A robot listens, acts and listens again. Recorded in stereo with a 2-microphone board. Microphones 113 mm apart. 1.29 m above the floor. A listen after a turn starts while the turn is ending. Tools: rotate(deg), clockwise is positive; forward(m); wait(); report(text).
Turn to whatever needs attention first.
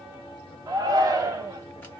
rotate(30)
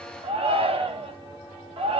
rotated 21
rotate(125)
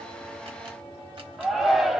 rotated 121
report("Found it: a shout, straight ahead, 1 to 2 m away.")